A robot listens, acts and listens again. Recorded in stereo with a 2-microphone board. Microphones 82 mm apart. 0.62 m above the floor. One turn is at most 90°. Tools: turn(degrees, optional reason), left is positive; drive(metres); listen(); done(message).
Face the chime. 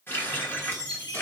turn(degrees=65, reason="The chime: about 65° left or 115° left.")
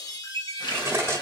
turn(degrees=45, reason="So it is at 45° left.")
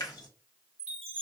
turn(degrees=15, reason="The chime is now 15° left.")
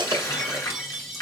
done("Found it: a chime, straight ahead, 1 to 2 m away.")